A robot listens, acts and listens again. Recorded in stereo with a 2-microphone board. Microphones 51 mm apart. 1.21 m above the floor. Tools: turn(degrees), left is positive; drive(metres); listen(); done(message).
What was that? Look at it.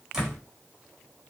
turn(degrees=-30)
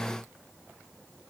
listen()
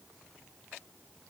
done("I heard a door slam, but can't make it out now. It was about 20° left or 140° right.")